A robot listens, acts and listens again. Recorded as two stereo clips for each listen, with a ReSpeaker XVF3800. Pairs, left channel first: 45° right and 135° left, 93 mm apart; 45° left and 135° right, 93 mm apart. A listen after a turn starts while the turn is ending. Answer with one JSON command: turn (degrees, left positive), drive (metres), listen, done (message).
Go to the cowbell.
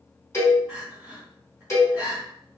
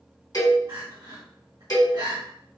{"turn": 10}
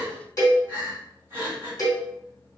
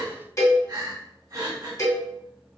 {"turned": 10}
{"drive": 1.0}
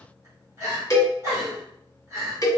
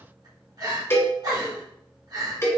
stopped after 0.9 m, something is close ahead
{"done": "I am next to the cowbell."}